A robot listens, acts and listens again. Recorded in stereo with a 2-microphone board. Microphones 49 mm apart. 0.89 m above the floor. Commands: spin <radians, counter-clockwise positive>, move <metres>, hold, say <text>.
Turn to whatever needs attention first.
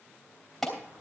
spin 0.52
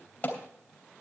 spin 2.53
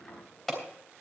say Found it: an alarm, straight ahead.